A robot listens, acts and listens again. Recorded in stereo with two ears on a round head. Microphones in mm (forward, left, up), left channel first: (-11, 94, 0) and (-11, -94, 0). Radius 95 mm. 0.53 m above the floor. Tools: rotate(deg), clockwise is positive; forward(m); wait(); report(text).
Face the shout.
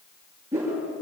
wait()
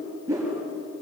wait()
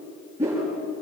report("I can't make out a shout, only a whoosh.")